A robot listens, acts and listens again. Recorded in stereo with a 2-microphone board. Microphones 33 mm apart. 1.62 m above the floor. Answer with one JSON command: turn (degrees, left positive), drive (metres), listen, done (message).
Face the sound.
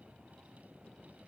{"listen": true}
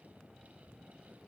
{"listen": true}
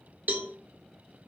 {"turn": -90}
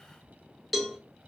{"done": "Found it: a cowbell, straight ahead."}